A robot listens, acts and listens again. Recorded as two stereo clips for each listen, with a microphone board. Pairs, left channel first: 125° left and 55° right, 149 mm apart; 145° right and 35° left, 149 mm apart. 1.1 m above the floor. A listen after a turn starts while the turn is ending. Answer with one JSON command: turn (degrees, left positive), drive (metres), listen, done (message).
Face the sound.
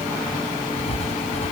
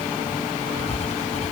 {"turn": 170}
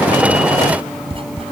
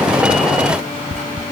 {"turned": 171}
{"done": "Facing the writing."}